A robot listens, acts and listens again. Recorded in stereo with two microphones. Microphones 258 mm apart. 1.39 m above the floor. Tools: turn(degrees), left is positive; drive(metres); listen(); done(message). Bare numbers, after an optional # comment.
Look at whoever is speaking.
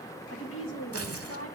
# The woman speaking: about 60° left or 120° left.
turn(60)
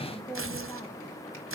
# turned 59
# So it is at 10° left.
turn(10)
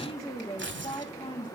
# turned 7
# The woman speaking is now 25° left.
turn(25)
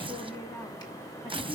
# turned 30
listen()
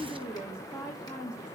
# The woman speaking is now 15° left.
turn(15)
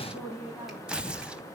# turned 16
done("Found it: a woman speaking, straight ahead.")